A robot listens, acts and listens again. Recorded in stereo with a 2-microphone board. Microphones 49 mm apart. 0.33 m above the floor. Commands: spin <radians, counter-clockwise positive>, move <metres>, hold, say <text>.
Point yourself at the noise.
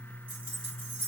spin -0.61
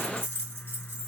spin -1.83
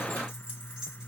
spin -0.26
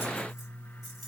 hold
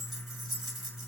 say Facing the keys jangling, 1 to 2 m away.